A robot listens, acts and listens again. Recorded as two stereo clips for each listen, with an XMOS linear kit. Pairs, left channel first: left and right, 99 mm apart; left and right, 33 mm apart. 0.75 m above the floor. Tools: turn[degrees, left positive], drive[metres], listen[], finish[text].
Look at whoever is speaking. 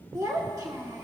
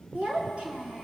Thought: The child speaking: about 35° right or 145° right.
Action: turn[-35]
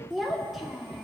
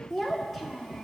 Action: finish[Facing the child speaking, 1 to 2 m away.]